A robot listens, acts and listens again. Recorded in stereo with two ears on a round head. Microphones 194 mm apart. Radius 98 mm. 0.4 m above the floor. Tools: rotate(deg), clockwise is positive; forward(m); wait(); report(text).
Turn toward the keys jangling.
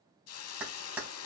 rotate(30)
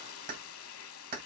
rotate(135)
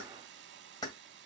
rotate(-20)
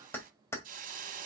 rotate(-10)
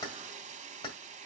rotate(-20)
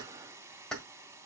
report("Facing the keys jangling, 1 to 2 m away.")